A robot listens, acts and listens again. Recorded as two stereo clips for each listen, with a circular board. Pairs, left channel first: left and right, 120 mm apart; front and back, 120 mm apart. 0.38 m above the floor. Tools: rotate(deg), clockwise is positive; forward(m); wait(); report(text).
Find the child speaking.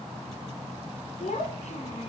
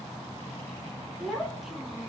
rotate(-90)
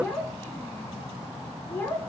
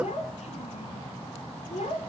rotate(-20)
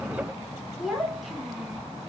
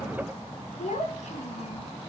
report("Facing the child speaking, 2 to 4 m away.")